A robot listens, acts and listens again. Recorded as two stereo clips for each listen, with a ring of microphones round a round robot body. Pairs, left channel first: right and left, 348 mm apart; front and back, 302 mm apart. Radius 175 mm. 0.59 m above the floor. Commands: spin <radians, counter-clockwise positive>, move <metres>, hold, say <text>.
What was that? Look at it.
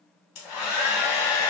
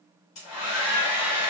spin -0.87
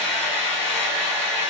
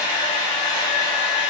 say Facing the hair dryer, under 1 m away.